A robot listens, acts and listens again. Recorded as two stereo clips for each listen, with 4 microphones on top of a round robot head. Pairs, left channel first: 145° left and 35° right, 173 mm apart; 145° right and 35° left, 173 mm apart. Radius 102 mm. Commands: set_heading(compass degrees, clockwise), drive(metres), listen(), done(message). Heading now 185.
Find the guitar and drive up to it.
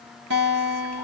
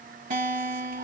set_heading(195)
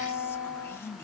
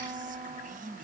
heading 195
drive(1.0)
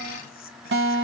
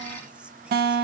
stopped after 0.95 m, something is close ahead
done("Arrived at the guitar, straight ahead.")